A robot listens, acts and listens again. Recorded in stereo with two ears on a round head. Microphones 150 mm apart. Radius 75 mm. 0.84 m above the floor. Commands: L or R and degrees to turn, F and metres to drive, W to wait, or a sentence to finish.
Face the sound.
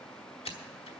L35
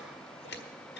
L110
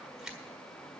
Facing the scissors, 1 to 2 m away.